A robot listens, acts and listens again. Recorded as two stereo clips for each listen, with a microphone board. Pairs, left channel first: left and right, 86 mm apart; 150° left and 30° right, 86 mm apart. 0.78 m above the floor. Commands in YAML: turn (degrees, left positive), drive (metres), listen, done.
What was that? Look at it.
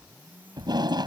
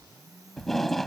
turn: -120
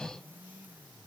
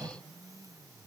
listen: true
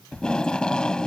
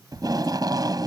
turn: 10
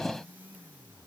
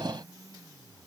done: "Facing the tape being pulled."